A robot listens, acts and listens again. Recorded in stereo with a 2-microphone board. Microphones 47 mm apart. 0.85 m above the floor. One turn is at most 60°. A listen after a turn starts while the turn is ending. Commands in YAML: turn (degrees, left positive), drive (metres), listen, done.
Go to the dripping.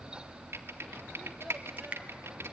turn: -30
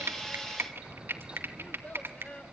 turn: -60
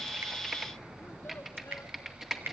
turn: -60
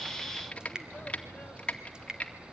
turn: -20
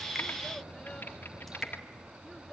listen: true
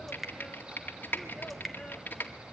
drive: 1.0
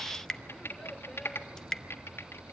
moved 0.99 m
turn: 15
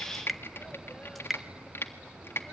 drive: 1.0
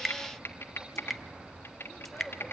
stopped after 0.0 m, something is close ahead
done: "Arrived at the dripping, straight ahead."